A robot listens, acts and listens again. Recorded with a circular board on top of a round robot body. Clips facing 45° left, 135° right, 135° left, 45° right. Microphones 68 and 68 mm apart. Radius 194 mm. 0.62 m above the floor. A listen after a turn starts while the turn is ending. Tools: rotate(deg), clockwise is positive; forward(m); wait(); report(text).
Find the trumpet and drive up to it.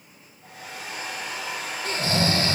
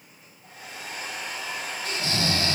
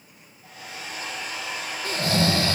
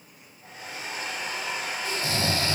wait()
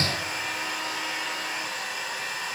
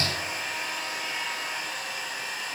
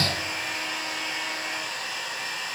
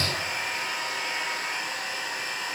wait()
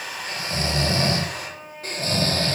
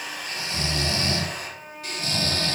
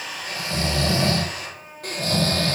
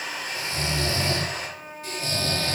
rotate(70)
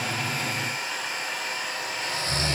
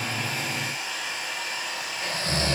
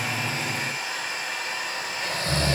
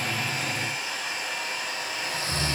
wait()
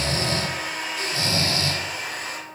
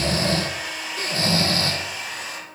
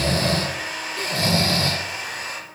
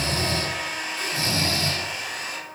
wait()
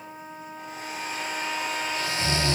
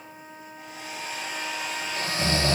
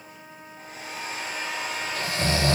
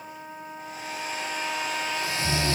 forward(1.0)
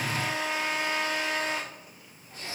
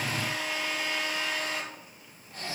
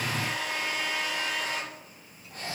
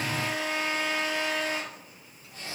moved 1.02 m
forward(1.0)
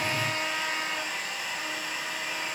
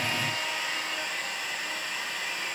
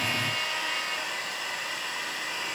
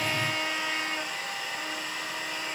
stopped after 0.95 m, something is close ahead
wait()
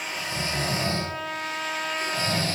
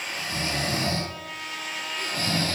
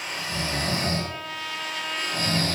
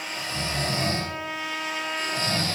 rotate(-20)
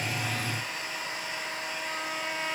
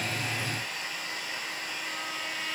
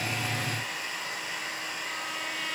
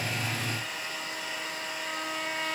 report("I am next to the trumpet.")